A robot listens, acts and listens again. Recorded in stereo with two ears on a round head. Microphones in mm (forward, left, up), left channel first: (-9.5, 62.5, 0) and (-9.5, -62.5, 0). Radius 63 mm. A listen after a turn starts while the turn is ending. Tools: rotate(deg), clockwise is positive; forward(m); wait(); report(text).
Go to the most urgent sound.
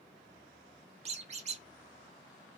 wait()
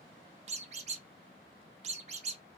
wait()
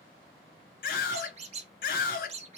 rotate(-75)
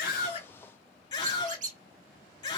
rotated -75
rotate(-30)
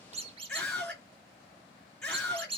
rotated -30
forward(1.0)
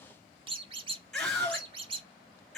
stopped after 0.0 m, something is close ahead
report("Blocked. The scream is further on, straight ahead.")